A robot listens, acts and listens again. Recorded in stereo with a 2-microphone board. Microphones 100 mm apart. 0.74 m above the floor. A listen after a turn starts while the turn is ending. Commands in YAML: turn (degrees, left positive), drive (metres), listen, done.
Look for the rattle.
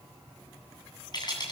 turn: 40
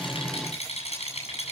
turn: 100
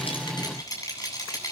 turn: 35
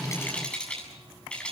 turn: 10
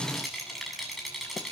done: "Facing the rattle."